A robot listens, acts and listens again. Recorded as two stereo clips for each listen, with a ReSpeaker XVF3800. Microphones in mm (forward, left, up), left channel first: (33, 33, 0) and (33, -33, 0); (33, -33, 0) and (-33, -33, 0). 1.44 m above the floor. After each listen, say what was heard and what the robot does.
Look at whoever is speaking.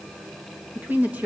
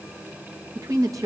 The woman speaking: 150° right. Turn 150° right.
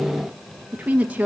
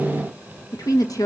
The woman speaking is now 20° right. Turn 20° right.
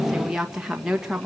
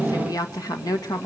The woman speaking is now 10° right. Turn 10° right.
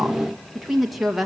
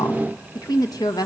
Facing the woman speaking, 1 to 2 m away.